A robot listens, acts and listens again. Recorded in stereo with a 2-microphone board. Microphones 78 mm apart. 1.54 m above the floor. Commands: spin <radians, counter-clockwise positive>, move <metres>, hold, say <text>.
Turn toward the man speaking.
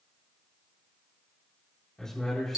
spin 0.52
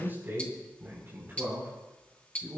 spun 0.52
spin -0.61
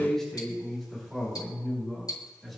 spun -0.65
say Facing the man speaking.